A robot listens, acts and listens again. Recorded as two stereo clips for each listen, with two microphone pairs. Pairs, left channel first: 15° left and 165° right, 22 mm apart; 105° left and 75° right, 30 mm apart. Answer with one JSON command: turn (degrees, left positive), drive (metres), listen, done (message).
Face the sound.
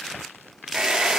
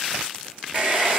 {"turn": -115}
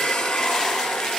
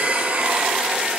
{"done": "Found it: a hair dryer, straight ahead."}